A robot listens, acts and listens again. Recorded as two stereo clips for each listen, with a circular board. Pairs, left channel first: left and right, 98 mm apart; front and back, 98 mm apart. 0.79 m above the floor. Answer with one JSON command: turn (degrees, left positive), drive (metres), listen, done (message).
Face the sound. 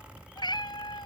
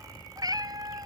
{"turn": 130}
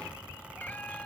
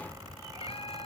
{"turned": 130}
{"turn": 15}
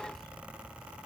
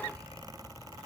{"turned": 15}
{"listen": true}
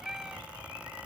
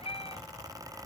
{"done": "Facing the cat meowing."}